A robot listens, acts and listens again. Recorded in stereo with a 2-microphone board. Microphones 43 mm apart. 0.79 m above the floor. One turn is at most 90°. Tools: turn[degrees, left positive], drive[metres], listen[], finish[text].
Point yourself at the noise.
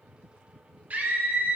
Thought: The scream: about 35° right or 145° right.
Action: turn[-35]
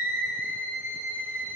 Thought: So it is at 105° right.
Action: turn[-90]
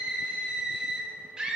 Thought: The scream is now 20° right.
Action: turn[-20]
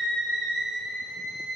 Action: finish[Facing the scream, 1 to 2 m away.]